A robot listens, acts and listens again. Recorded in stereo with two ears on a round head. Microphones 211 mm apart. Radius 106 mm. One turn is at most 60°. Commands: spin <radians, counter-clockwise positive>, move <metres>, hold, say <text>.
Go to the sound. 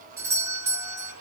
spin -0.52
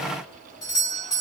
spin 0.26
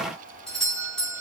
move 1.0
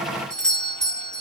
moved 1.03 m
move 1.0
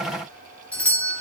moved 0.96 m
move 1.0
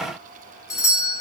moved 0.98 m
spin 0.26
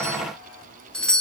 move 1.0
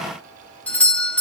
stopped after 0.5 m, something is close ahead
spin 0.17
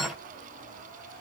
hold
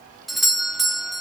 say Arrived at the doorbell, straight ahead.